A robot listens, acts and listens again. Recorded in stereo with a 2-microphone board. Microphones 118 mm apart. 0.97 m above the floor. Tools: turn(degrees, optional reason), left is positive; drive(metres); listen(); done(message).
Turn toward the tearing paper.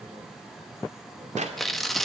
turn(degrees=30)
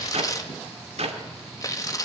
turn(degrees=145, reason="So it is at 145° left.")
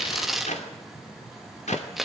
done("Found it: tearing paper, straight ahead, 1 to 2 m away.")